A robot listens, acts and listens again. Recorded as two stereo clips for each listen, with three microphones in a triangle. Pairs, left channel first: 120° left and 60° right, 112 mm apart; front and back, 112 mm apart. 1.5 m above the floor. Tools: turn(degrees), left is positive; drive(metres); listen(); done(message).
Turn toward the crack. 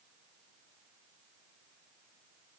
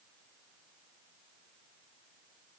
listen()
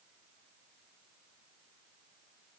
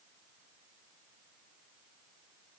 listen()
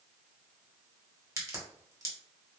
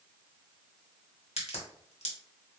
done("Facing the crack.")